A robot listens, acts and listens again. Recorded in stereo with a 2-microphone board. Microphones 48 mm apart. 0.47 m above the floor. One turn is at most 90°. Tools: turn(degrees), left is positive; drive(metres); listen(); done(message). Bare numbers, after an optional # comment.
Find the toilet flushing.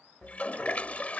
# The toilet flushing: about 30° left or 150° left.
turn(30)
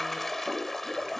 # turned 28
done("Found it: a toilet flushing, straight ahead.")